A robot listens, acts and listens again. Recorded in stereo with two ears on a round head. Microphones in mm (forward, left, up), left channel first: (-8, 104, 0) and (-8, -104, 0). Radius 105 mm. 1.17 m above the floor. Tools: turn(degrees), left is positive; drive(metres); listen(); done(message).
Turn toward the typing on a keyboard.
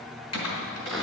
turn(degrees=90)
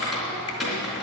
done("Found it: typing on a keyboard, straight ahead, 2 to 4 m away.")